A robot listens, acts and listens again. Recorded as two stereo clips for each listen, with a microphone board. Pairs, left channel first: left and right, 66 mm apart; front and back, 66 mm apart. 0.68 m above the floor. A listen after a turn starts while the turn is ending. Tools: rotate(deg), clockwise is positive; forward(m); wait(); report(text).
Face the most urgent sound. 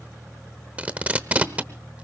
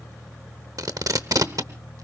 wait()
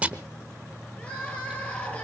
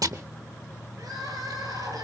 rotate(-160)
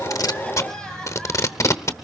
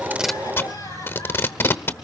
rotate(-10)
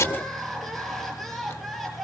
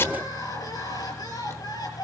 report("Facing the crying.")